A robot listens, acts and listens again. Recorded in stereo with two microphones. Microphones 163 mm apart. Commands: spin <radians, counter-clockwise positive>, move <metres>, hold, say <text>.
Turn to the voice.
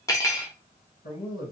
spin 1.22
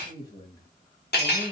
spin 0.52
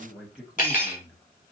say Found it: a man speaking, straight ahead.